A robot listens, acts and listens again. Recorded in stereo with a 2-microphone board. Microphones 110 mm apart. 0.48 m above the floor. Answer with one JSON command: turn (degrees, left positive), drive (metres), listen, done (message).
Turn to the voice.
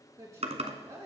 {"turn": -30}
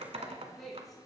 {"done": "Facing the woman speaking."}